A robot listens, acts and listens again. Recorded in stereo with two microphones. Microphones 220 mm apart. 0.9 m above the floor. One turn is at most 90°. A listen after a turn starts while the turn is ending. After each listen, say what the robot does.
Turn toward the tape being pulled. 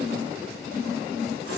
Keep listening.
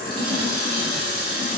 Keep listening.
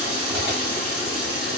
I can't make out tape being pulled to turn to.